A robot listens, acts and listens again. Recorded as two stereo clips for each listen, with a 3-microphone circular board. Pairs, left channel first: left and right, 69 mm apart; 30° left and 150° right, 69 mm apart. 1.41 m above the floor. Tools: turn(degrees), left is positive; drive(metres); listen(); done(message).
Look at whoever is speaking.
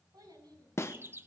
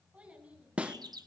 turn(degrees=-80)
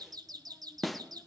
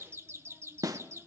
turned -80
listen()
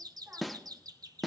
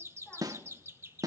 listen()
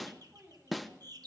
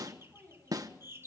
turn(degrees=-35)
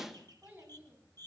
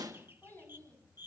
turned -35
turn(degrees=-30)
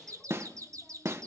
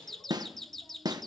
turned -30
listen()
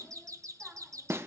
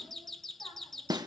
listen()
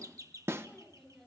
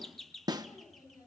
done("Facing the child speaking.")